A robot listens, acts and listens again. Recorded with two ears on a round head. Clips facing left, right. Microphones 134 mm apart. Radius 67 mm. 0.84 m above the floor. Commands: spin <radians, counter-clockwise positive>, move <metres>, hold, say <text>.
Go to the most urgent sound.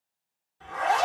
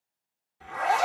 hold
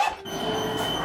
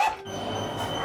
spin 1.05
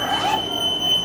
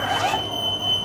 spin 0.52
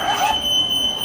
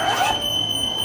spin -0.17
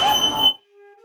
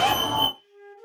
move 1.0
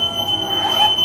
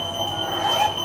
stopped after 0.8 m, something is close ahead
say Arrived at the fire alarm, straight ahead.